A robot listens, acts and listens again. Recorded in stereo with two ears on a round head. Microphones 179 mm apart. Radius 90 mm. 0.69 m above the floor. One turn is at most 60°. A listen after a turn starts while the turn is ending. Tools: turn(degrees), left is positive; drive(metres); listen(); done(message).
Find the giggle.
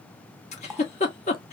turn(degrees=35)
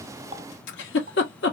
turn(degrees=60)
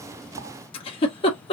turn(degrees=30)
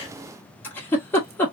turn(degrees=10)
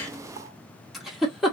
done("Facing the giggle, 2 to 4 m away.")